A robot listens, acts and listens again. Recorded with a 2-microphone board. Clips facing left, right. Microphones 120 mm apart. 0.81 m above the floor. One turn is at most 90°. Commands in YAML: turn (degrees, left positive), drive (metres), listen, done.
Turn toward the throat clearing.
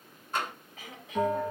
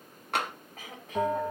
turn: -45
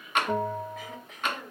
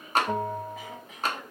done: "Facing the throat clearing, 1 to 2 m away."